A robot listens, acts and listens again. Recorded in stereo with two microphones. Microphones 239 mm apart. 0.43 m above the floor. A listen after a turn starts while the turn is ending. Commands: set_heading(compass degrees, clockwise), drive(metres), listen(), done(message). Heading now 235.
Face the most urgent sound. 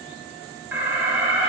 set_heading(265)
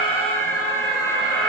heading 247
done("Found it: an alarm, straight ahead.")